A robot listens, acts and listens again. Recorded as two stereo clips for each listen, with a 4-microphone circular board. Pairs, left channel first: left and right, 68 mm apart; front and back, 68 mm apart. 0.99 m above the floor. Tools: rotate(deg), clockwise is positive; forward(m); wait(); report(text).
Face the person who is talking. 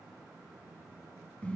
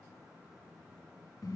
wait()
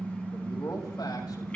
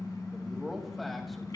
rotate(-90)
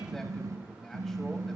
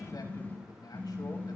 report("Facing the man speaking.")